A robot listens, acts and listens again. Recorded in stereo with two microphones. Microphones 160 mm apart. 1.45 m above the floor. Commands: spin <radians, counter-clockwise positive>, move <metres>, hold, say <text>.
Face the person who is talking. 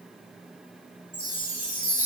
hold
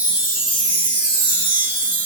hold
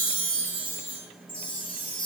say I can't make out anyone speaking, only a chime.